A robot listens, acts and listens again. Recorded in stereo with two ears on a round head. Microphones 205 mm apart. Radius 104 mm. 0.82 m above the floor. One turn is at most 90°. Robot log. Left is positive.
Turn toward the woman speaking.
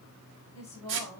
note: The woman speaking: about 30° left or 150° left.
cmd yaw +30
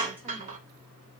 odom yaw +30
cmd idle
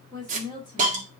note: The woman speaking: about 20° left or 160° left.
cmd yaw +20
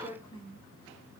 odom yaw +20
note: The woman speaking: about 20° left or 160° left.
cmd yaw +20
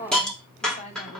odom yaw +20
note: The woman speaking: about 30° left or 150° left.
cmd yaw +30
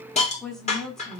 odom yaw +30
end: Found it: a woman speaking, straight ahead.